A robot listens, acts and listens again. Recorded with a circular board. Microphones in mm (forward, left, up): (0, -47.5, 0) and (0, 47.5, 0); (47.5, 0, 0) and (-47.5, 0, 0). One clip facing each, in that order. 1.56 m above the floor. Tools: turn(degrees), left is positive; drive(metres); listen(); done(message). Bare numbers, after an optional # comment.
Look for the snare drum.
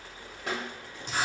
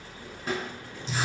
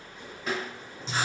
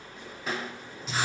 # The snare drum: 90° right.
turn(-90)
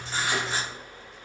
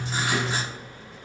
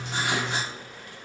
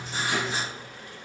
listen()
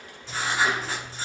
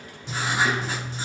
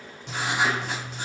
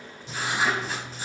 listen()
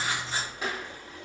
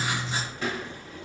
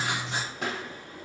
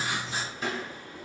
# The snare drum is now 15° right.
turn(-15)
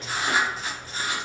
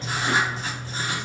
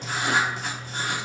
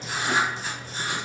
listen()
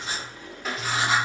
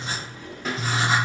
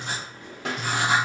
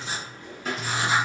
done("Facing the snare drum.")